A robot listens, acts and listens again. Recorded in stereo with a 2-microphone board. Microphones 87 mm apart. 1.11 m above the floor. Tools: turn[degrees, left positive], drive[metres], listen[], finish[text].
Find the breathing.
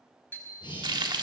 Thought: The breathing: about 70° left or 110° left.
Action: turn[70]
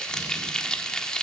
Action: listen[]
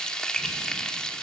Action: listen[]
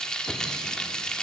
Action: finish[I heard breathing, but can't make it out now. It was about straight ahead or 40° left.]